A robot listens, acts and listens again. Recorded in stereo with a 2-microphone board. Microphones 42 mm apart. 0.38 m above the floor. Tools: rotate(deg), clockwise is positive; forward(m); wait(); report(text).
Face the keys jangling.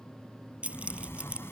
rotate(30)
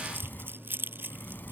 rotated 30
rotate(125)
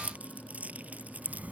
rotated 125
rotate(35)
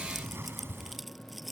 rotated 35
report("Facing the keys jangling.")